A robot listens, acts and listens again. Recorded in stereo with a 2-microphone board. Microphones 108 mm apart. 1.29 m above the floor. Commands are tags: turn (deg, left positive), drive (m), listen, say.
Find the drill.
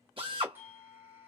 <turn deg="-55"/>
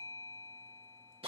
<turn deg="-65"/>
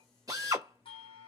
<turn deg="-35"/>
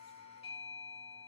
<listen/>
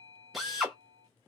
<say>Found it: a drill, straight ahead.</say>